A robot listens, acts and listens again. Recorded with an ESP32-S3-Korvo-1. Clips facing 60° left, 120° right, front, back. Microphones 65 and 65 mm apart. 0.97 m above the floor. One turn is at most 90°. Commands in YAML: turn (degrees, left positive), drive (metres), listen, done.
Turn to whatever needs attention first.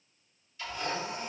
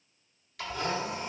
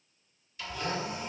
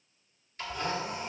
listen: true
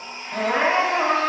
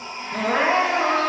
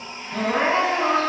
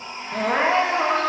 turn: 90
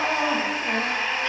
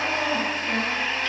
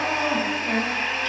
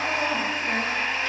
turn: 55
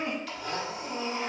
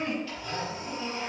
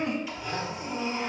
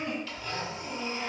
done: "Facing the crying, under 1 m away."